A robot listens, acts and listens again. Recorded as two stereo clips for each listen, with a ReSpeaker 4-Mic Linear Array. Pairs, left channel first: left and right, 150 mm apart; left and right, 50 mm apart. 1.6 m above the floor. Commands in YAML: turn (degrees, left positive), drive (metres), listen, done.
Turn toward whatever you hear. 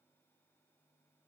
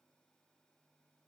listen: true
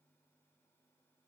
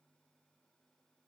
listen: true
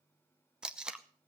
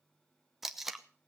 turn: -30
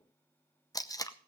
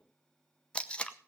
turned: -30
turn: 25
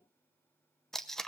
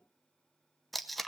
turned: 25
done: "Facing the tape being pulled."